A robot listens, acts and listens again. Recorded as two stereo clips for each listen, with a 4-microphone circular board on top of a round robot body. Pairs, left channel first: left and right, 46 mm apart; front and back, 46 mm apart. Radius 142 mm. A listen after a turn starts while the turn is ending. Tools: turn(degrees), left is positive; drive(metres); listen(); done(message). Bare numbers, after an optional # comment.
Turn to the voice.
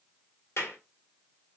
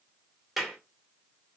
listen()
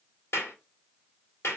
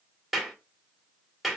listen()
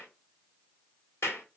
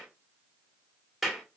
done("I can't make out anyone speaking to turn to.")